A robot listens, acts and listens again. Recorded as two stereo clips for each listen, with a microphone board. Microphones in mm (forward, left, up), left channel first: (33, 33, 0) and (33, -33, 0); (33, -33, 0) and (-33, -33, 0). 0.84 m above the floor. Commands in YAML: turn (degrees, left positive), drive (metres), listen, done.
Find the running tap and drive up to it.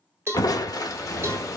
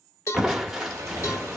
turn: 135
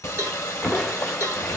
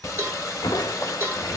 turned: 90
turn: 45
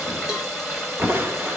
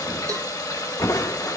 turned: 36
drive: 1.0
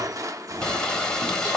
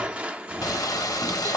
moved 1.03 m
turn: 10
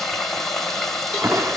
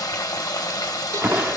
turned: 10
drive: 1.0
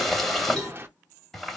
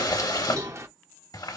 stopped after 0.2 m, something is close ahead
done: "I am next to the running tap."